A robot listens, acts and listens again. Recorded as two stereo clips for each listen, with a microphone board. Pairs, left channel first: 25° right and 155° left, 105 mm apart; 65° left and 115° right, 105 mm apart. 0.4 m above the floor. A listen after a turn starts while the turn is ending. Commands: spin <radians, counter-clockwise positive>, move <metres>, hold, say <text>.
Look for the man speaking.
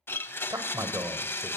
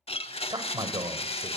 spin -2.62
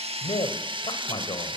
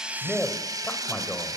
say Found it: a man speaking, straight ahead.